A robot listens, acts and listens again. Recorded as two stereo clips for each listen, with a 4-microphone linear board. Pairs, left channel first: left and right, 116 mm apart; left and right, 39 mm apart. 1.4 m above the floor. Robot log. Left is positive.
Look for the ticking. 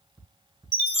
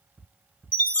note: The ticking: about 20° right or 160° right.
cmd yaw -20
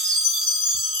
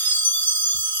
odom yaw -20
cmd idle
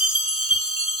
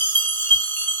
cmd idle
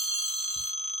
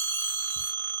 end: I heard ticking, but can't make it out now. It was about straight ahead or 140° right.